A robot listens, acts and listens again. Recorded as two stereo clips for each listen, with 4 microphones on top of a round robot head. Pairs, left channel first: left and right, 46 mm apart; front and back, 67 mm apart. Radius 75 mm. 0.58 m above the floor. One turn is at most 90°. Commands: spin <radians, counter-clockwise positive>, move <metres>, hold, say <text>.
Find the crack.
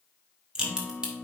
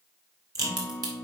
spin -1.57
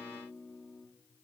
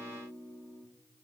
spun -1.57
spin -1.22
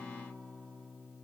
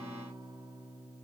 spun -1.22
say Facing where the crack came from. I can't hear it now.